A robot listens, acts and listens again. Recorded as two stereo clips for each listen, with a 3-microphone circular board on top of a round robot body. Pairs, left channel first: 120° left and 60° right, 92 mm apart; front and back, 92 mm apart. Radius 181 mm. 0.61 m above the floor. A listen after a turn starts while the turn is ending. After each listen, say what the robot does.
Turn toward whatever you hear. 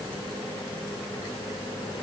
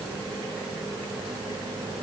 Keep listening.
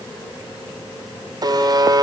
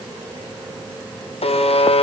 Turn 10° right.
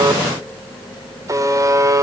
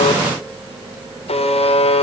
Found it: a buzzer, straight ahead, 1 to 2 m away.